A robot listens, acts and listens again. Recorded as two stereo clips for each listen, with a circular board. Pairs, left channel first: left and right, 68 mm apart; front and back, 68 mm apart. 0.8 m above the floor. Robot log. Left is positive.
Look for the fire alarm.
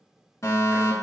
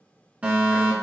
note: The fire alarm: 115° left.
cmd yaw +115
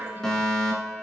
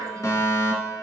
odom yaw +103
note: The fire alarm is now 10° left.
cmd yaw +10
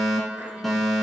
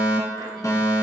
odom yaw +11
end: Found it: a fire alarm, straight ahead, 2 to 4 m away.